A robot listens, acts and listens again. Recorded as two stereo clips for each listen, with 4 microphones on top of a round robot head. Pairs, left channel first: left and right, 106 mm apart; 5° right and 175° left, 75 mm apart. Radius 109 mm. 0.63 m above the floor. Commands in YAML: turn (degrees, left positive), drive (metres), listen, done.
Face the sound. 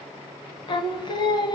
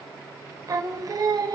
turn: 140
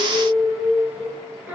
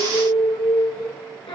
turn: -15
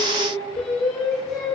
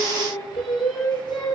done: "Found it: singing, straight ahead, over 4 m away."